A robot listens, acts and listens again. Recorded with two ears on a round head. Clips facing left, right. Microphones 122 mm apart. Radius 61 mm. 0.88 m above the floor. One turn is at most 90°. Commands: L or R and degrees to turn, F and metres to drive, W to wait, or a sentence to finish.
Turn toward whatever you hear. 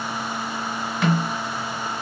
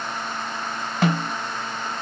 R30
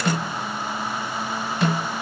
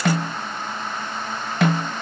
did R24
R90
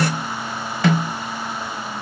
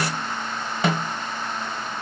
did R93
R25
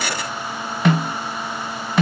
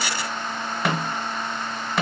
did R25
Facing the snare drum, 1 to 2 m away.